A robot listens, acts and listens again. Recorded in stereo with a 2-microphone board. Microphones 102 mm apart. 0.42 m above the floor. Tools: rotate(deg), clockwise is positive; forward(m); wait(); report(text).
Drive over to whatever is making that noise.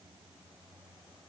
wait()
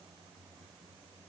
wait()
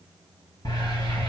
rotate(-45)
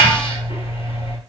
rotate(-85)
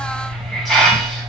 forward(1.0)
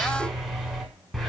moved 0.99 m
forward(1.0)
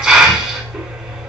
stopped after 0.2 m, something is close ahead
rotate(10)
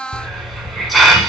report("Arrived at the hiss, straight ahead.")